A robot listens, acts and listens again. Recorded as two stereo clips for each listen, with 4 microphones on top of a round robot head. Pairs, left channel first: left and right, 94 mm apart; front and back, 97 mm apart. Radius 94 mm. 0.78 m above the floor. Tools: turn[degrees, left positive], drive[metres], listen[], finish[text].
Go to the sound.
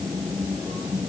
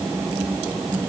Action: listen[]
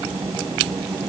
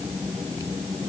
Action: listen[]
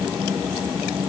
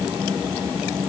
Action: finish[I can't make out anything.]